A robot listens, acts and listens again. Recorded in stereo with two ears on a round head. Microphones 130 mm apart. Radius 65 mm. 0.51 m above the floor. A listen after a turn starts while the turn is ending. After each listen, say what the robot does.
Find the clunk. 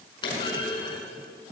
Turn 35° left.
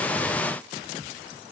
Keep listening.
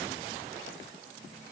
I heard a clunk, but can't make it out now. It was about straight ahead or 110° left.